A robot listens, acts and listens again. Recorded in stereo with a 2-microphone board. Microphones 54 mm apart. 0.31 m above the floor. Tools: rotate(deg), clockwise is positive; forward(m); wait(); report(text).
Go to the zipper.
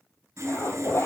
rotate(-55)
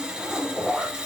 forward(1.0)
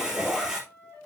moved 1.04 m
forward(1.0)
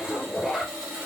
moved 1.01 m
rotate(-10)
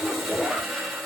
forward(1.0)
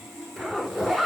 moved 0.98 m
forward(1.0)
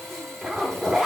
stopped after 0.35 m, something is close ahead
report("I am next to the zipper.")